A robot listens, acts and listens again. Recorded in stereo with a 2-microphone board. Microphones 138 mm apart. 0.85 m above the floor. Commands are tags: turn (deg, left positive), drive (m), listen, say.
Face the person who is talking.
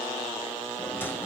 <listen/>
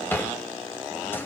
<listen/>
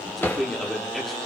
<turn deg="30"/>
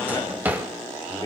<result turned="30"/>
<turn deg="145"/>
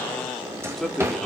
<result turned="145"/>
<say>Facing the man speaking, 2 to 4 m away.</say>